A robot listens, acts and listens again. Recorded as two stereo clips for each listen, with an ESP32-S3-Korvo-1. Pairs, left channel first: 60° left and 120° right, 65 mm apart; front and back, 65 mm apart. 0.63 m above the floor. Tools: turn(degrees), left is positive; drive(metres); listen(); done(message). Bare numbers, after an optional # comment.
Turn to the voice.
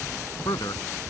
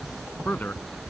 # The man speaking: 65° left.
turn(65)
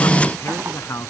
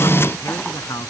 # The man speaking is now 20° left.
turn(20)
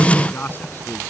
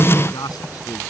done("Found it: a man speaking, straight ahead.")